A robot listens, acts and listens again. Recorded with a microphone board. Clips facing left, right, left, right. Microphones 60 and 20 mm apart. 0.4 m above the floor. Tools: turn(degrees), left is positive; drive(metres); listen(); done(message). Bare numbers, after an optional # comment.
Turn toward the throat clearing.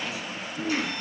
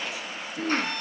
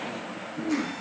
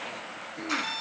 turn(-90)
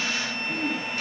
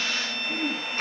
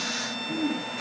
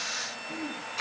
# So it is at 10° right.
turn(-10)
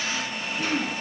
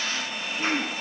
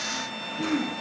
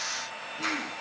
done("Found it: throat clearing, straight ahead.")